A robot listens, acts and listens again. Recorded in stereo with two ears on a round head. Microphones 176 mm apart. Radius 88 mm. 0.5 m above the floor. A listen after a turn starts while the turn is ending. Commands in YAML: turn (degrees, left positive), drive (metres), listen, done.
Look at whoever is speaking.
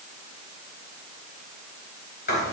listen: true
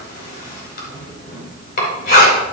listen: true
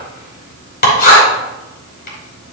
done: "I can't make out anyone speaking, only writing."